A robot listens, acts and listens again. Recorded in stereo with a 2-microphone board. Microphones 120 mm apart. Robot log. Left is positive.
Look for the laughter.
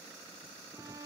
cmd idle
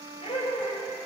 note: The laughter: about 75° left or 105° left.
cmd yaw +75
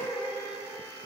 end: Facing the laughter, 2 to 4 m away.